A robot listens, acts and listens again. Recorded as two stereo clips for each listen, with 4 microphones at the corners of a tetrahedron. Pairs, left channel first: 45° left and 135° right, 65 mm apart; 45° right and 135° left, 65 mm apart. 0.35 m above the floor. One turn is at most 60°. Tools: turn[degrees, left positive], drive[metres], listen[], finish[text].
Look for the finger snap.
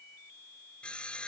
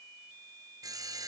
Action: listen[]
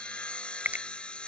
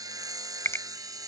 Thought: The finger snap: 75° right.
Action: turn[-60]
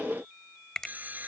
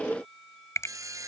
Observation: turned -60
Thought: The finger snap is now 30° right.
Action: turn[-30]
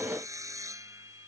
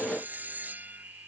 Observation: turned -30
Action: listen[]
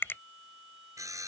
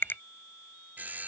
Action: finish[Found it: a finger snap, straight ahead.]